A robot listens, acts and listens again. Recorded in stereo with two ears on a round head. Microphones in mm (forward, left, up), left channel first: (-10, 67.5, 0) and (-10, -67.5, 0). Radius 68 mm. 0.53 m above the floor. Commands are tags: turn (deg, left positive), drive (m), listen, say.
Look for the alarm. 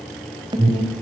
<turn deg="-30"/>
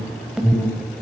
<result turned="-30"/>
<say>Facing the alarm, 2 to 4 m away.</say>